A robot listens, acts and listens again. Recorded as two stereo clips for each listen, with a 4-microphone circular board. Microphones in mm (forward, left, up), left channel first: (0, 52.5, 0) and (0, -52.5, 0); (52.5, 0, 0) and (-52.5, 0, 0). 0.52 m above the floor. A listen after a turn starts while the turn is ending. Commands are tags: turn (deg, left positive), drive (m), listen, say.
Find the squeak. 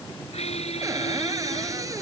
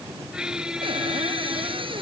<turn deg="100"/>
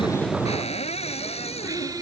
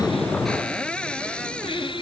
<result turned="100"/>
<listen/>
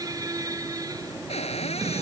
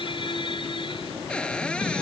<turn deg="-35"/>
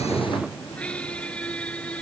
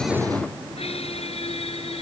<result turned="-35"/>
<turn deg="10"/>
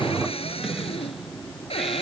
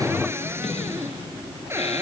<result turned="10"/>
<say>Facing the squeak.</say>